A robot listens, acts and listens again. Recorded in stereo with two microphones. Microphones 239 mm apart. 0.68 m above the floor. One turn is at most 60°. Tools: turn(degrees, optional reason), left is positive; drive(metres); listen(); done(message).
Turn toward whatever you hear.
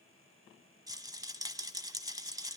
turn(degrees=-15, reason="The rattle: about 15° right or 165° right.")
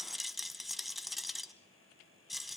done("Found it: a rattle, straight ahead.")